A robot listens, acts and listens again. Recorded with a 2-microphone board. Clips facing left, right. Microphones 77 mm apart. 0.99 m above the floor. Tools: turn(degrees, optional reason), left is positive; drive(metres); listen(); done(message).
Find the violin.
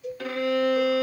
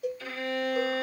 turn(degrees=60, reason="The violin: about 60° left or 120° left.")
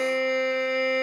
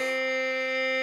done("Found it: a violin, straight ahead.")